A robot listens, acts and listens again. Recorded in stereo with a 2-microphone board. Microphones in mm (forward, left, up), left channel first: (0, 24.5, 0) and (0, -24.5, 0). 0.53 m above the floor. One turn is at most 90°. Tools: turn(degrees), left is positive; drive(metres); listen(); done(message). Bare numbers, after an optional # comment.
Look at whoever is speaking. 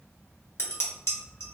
listen()
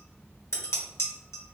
listen()
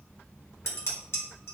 done("I can't make out anyone speaking to turn to.")